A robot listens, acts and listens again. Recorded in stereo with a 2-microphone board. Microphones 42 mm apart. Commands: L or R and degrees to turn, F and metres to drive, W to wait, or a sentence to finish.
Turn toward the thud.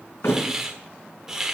L70
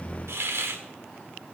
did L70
W
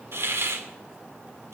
I heard a thud, but can't make it out now. It was about straight ahead or 40° left.